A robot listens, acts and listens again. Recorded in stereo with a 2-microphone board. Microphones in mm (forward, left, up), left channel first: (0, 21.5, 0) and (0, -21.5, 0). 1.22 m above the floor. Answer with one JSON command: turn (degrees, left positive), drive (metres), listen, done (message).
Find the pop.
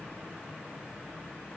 {"listen": true}
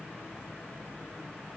{"listen": true}
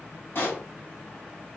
{"turn": 55}
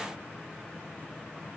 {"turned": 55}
{"listen": true}
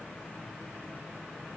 {"done": "I heard a pop, but can't make it out now. It was about straight ahead or 70° left."}